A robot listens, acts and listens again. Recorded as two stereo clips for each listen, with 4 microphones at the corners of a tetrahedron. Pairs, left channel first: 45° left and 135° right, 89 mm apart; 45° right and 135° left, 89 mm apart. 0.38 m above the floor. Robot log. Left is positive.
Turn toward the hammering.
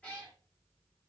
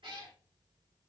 cmd idle
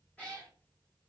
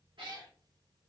cmd idle
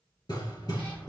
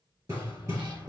note: The hammering: 85° left.
cmd yaw +85
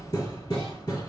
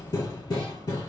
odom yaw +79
end: Facing the hammering.